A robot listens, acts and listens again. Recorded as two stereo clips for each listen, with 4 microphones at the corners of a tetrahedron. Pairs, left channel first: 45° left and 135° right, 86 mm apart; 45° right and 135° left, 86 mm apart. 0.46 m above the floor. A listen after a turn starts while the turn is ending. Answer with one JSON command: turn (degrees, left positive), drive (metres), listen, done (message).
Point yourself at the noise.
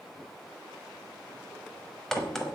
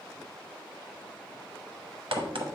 {"turn": 130}
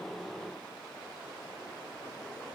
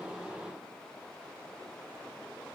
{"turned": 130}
{"done": "I heard a crack from this way, but can't make it out now."}